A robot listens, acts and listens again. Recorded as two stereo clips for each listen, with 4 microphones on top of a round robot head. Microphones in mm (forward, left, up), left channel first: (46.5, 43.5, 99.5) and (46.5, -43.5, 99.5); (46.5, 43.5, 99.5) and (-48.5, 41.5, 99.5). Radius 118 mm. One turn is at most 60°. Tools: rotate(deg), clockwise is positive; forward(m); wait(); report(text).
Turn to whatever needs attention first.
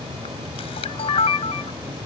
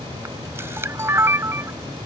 wait()
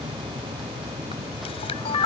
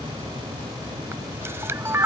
wait()
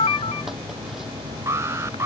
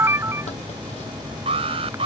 rotate(60)
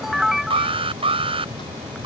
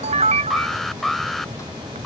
rotate(60)
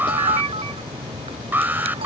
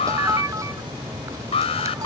rotate(20)
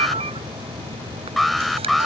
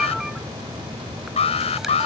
report("Found it: an alarm, straight ahead.")